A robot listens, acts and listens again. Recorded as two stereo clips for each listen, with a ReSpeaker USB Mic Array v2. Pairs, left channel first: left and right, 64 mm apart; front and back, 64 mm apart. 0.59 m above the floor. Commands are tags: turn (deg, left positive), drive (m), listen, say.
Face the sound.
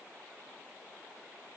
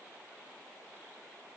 <listen/>
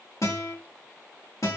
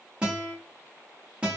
<turn deg="110"/>
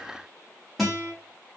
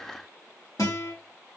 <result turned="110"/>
<say>Found it: a guitar, straight ahead.</say>